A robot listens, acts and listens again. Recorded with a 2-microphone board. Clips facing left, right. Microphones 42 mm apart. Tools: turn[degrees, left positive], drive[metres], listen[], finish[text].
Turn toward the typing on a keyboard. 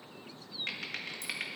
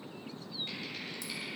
Thought: The typing on a keyboard: about 65° left or 115° left.
Action: turn[65]
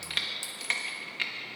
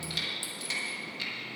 Thought: So it is at 45° left.
Action: turn[45]
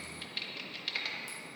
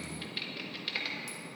Action: finish[Facing the typing on a keyboard, 1 to 2 m away.]